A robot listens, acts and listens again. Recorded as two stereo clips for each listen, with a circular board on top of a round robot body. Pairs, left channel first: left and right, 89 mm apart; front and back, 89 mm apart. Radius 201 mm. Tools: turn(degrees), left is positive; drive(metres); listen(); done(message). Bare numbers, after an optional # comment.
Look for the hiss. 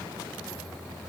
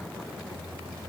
listen()
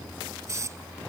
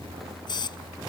# The hiss: 35° right.
turn(-35)
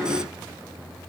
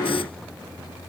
listen()
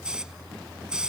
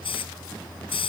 # The hiss is now 10° right.
turn(-10)
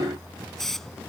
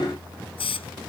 done("Found it: a hiss, straight ahead.")